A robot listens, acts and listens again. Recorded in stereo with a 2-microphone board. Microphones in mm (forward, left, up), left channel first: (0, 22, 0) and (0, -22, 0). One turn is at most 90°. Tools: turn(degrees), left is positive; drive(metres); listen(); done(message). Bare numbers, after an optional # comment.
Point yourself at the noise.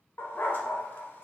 # The dog barking: about 55° left or 125° left.
turn(55)
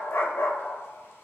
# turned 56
# So it is at 70° left.
turn(70)
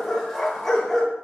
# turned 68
done("Facing the dog barking, under 1 m away.")